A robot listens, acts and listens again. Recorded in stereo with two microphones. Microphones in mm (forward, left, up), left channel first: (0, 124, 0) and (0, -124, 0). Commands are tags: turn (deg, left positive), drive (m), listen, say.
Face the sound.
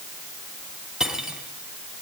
<turn deg="-30"/>
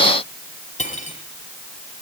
<turn deg="30"/>
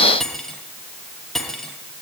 <say>Found it: cutlery clinking, straight ahead, 2 to 4 m away.</say>